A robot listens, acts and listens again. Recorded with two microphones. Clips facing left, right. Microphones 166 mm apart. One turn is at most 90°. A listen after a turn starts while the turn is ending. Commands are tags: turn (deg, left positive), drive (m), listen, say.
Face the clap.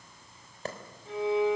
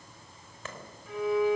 <turn deg="40"/>
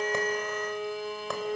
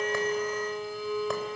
<listen/>
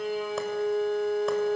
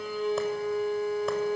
<listen/>
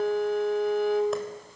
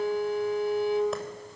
<say>I heard a clap, but can't make it out now. It was about straight ahead or 100° left.</say>